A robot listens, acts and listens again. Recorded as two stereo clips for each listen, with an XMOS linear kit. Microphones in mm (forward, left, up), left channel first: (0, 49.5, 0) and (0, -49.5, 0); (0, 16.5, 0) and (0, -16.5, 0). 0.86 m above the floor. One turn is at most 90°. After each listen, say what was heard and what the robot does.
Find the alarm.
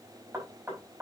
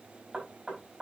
Keep listening.
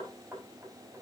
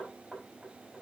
Keep listening.
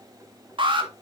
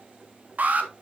The alarm: about 55° right or 125° right. Turn 55° right.
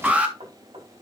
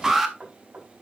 So it is at 15° right. Turn 15° right.
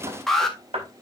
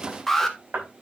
Facing the alarm.